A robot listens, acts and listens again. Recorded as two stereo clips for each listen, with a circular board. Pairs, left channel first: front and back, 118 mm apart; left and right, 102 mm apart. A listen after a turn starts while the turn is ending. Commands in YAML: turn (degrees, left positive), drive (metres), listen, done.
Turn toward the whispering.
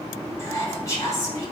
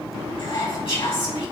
turn: 65
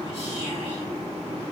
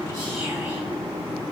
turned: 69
listen: true
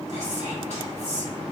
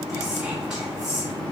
done: "Facing the whispering, 2 to 4 m away."